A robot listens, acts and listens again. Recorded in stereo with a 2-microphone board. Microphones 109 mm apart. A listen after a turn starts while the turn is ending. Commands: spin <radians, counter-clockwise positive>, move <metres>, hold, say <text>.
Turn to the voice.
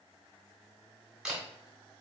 hold
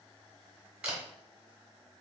hold
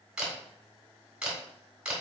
say I can't make out anyone speaking to turn to.